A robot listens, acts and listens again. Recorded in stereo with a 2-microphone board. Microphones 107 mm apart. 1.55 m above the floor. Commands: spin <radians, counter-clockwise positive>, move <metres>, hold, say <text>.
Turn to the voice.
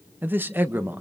spin -0.35
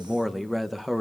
say Found it: a man speaking, straight ahead.